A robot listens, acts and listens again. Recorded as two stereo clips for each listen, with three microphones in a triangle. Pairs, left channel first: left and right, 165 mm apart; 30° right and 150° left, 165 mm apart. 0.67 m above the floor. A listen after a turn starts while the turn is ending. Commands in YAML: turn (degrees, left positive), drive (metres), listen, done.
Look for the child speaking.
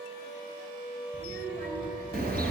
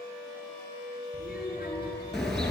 turn: -55
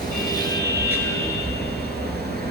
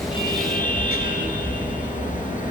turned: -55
listen: true
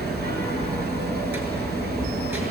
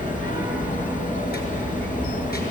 listen: true
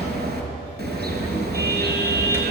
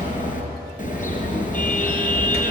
done: "Facing where the child speaking came from. I can't hear it now."